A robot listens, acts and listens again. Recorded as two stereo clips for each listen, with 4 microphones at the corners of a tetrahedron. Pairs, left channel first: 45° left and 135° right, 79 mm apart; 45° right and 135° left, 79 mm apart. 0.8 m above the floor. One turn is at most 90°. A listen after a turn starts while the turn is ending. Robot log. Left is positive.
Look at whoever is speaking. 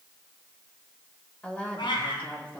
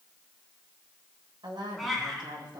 note: The woman speaking: 115° left.
cmd yaw +90
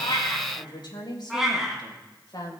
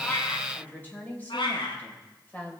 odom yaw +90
note: The woman speaking is now 25° left.
cmd yaw +25
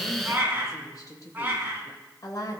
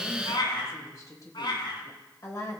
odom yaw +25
end: Found it: a woman speaking, straight ahead.